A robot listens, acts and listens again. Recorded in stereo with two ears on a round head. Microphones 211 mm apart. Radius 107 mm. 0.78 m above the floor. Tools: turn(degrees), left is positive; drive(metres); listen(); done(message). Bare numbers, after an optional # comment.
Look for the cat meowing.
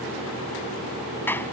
listen()
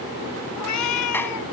turn(90)
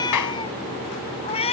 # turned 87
# So it is at 25° left.
turn(25)
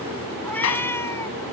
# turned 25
# The cat meowing is now 10° left.
turn(10)
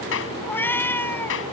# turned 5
# The cat meowing is now 10° left.
turn(10)
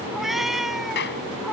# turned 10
done("Facing the cat meowing.")